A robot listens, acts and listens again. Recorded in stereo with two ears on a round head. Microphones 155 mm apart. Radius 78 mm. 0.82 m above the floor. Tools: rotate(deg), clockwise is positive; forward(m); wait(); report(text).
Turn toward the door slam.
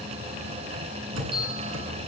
rotate(90)
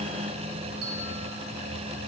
report("I heard a door slam from this way, but can't make it out now.")